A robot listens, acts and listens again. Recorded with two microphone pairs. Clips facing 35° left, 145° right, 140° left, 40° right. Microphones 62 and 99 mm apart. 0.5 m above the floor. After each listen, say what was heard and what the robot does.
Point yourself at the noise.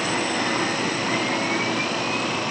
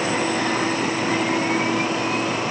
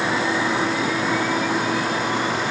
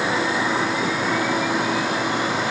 Keep listening.
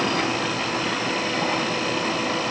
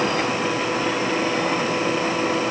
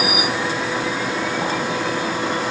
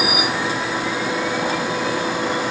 Keep listening.
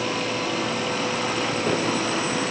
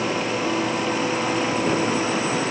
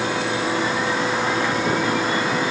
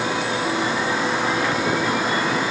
I can't make out anything to turn to.